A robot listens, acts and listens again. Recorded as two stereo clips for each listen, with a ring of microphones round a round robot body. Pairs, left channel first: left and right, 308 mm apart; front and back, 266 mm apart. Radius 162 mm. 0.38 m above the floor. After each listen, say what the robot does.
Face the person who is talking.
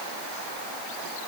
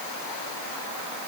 Keep listening.
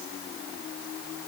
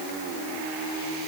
Keep listening.
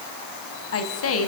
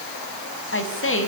Turn 45° left.
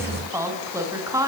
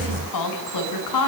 Turn 10° right.
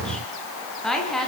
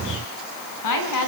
Found it: a woman speaking, straight ahead.